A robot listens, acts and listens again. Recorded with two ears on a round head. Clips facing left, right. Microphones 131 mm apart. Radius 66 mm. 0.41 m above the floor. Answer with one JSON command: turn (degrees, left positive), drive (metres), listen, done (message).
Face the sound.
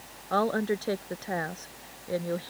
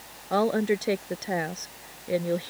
{"turn": -20}
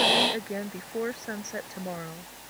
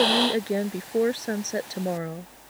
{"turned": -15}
{"turn": -40}
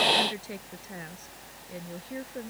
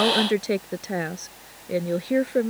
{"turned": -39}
{"turn": -100}
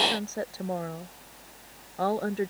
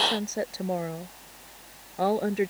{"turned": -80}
{"turn": -15}
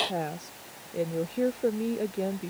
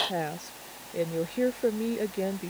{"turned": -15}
{"done": "Facing the woman speaking."}